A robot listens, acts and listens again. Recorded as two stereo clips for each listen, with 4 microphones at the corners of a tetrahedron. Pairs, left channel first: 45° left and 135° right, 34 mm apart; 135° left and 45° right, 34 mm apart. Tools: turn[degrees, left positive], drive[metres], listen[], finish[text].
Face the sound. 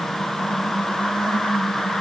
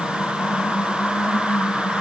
Action: listen[]
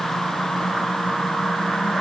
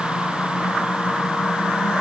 Action: listen[]
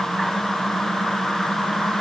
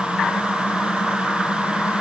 Action: finish[I can't make out anything.]